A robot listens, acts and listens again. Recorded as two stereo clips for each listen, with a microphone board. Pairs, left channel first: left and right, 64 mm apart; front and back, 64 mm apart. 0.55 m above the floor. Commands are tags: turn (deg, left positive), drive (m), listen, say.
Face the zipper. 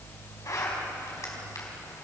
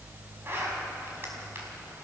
<turn deg="130"/>
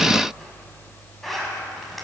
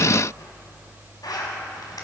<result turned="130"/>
<say>Found it: a zipper, straight ahead, over 4 m away.</say>